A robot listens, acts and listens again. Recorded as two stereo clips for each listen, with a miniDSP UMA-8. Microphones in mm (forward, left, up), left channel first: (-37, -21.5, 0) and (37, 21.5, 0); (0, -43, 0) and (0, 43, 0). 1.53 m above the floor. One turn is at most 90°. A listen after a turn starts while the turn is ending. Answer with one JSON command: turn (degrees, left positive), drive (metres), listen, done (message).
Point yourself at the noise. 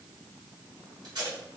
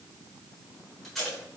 {"done": "Found it: tape being pulled, straight ahead, 1 to 2 m away."}